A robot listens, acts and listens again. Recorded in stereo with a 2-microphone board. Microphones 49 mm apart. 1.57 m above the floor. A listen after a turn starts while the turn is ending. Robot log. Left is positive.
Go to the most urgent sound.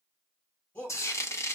note: The shout: about 40° left or 140° left.
cmd yaw +40
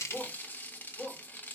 cmd fwd 1.0
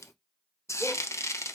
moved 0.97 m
cmd idle
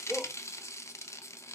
cmd fwd 1.0
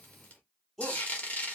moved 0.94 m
cmd fwd 1.0
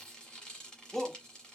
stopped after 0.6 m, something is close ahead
end: I am next to the shout.